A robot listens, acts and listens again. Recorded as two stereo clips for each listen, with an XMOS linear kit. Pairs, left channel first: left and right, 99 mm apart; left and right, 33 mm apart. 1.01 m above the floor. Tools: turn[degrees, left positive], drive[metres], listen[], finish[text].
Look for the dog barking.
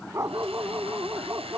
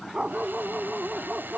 Thought: The dog barking: about 30° right or 150° right.
Action: turn[-30]
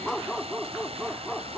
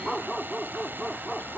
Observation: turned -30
Action: finish[Found it: a dog barking, straight ahead.]